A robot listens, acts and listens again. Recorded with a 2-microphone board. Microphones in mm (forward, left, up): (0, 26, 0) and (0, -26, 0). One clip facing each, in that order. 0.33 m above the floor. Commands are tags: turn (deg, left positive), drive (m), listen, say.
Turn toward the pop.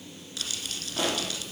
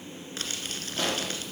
<turn deg="30"/>
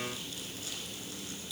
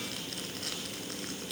<listen/>
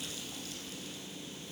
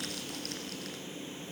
<say>I heard a pop, but can't make it out now. It was about 20° right or 140° left.</say>